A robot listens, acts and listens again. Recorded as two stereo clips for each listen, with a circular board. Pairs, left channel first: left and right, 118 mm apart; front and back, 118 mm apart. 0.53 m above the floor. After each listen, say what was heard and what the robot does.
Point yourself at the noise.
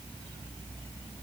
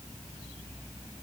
Keep listening.
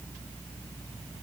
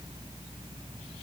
Keep listening.
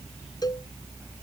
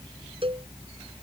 The cowbell: 145° left. Turn 145° left.
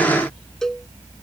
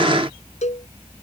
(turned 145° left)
Found it: a cowbell, straight ahead.